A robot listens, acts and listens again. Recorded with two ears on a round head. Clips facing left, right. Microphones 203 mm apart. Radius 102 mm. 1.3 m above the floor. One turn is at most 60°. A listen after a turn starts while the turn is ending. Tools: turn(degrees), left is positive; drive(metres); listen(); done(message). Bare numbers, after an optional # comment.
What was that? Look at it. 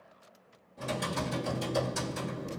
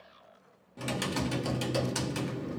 # The typing on a keyboard: about 70° right or 110° right.
turn(-60)
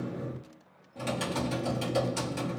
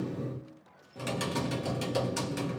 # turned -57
# So it is at 15° right.
turn(-15)
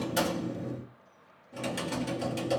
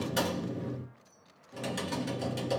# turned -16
done("Found it: typing on a keyboard, straight ahead, 1 to 2 m away.")